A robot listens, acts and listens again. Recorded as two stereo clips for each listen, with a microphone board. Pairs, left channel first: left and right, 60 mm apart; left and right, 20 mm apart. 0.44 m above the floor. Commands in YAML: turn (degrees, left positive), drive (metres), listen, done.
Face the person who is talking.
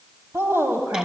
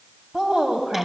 turn: -45
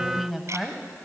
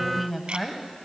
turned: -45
done: "Facing the woman speaking."